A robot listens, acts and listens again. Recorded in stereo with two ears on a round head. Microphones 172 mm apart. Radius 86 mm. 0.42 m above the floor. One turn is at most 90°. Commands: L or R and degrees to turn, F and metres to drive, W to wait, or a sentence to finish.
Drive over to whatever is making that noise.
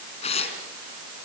L35
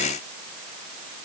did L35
W
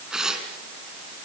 F1.0
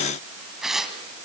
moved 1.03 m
F1.0
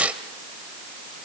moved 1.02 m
R10
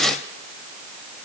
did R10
F1.0
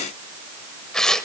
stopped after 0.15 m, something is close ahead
Arrived at the tearing paper, straight ahead.